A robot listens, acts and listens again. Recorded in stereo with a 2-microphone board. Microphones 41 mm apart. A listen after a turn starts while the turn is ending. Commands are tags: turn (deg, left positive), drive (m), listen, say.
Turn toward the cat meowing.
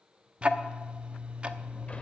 <listen/>
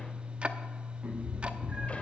<turn deg="-30"/>
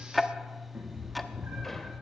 <turn deg="-115"/>
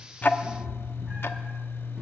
<listen/>
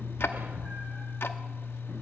<listen/>
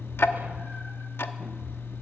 <say>I heard a cat meowing from this way, but can't make it out now.</say>